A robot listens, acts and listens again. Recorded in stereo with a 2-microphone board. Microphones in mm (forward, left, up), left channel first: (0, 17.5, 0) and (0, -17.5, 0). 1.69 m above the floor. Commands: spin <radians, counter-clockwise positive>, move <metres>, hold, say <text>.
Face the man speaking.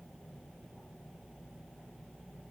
hold
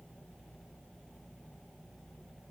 hold
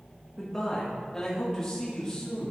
spin 0.35
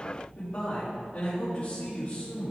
spin 2.36
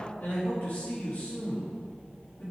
spin 0.96
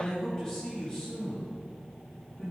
spin 0.35
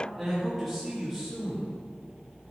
say Found it: a man speaking, straight ahead.